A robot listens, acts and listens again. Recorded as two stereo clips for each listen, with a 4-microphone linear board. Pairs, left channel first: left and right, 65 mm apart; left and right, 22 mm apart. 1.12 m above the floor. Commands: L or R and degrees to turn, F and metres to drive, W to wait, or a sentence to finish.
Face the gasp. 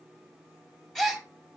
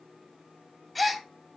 L30
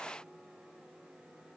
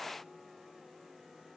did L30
W
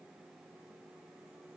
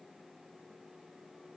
I heard a gasp, but can't make it out now. It was about 25° right or 145° left.